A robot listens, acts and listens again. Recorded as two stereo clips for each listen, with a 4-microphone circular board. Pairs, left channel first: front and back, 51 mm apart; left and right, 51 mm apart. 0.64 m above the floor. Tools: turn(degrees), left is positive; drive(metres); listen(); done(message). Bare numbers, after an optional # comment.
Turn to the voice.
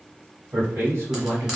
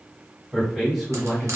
# The man speaking: 175° right.
turn(-175)
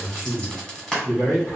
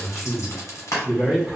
done("Found it: a man speaking, straight ahead, 1 to 2 m away.")